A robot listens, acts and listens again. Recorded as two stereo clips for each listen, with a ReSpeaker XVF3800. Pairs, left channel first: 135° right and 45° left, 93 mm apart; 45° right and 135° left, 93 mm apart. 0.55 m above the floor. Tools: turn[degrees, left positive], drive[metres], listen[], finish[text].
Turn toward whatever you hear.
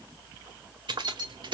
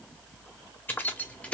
Thought: The keys jangling: 30° left.
Action: turn[30]
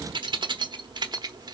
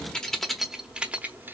Thought: The keys jangling is now 65° left.
Action: turn[65]
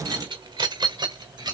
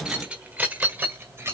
Thought: The keys jangling is now 75° left.
Action: turn[75]
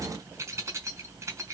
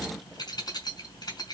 Thought: The keys jangling is now 10° right.
Action: turn[-10]
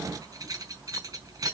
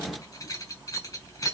Action: finish[Found it: keys jangling, straight ahead.]